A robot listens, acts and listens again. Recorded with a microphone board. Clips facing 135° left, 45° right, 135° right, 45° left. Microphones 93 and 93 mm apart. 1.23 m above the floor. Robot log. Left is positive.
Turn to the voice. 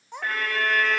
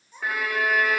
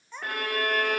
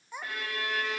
note: The child speaking: 125° left.
cmd yaw +125
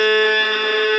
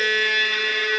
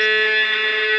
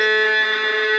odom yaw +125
cmd idle
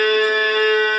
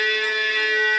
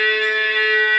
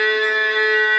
cmd idle
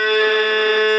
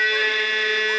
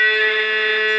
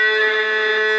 end: I heard a child speaking from this way, but can't make it out now.